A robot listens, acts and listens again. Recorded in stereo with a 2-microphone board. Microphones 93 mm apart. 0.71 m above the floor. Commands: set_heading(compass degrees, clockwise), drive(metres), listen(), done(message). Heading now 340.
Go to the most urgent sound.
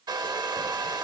listen()
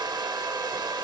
listen()
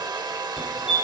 set_heading(10)
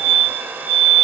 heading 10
set_heading(155)
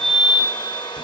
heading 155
drive(1.0)
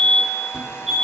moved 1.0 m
drive(1.0)
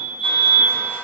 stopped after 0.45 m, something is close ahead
set_heading(165)
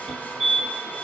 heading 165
done("I am next to the fire alarm.")